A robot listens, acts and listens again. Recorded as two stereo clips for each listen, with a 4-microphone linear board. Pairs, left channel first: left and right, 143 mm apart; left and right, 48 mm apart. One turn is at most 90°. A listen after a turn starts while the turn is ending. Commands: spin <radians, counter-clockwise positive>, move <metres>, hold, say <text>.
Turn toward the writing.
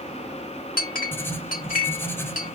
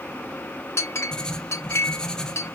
spin 0.26
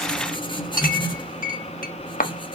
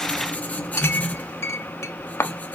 spin 1.57
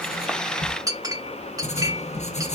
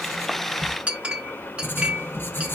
spin 0.87
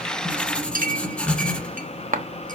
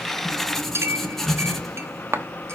say Found it: writing, straight ahead.